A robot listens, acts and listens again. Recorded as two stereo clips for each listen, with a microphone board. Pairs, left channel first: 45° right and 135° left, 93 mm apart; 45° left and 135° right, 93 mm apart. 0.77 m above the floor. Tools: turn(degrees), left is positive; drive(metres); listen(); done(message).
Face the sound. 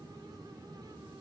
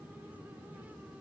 listen()
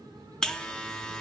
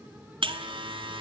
turn(degrees=-130)
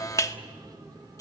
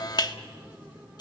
turn(degrees=10)
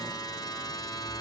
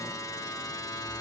done("Facing the buzzer.")